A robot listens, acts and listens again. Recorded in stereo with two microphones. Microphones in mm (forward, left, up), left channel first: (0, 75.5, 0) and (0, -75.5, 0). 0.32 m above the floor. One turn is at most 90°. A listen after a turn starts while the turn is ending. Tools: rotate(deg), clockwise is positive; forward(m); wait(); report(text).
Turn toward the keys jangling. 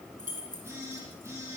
rotate(70)
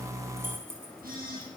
rotate(15)
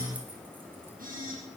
wait()
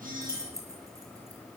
rotate(20)
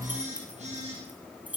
rotate(10)
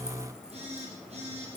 wait()
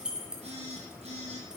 report("Found it: keys jangling, straight ahead.")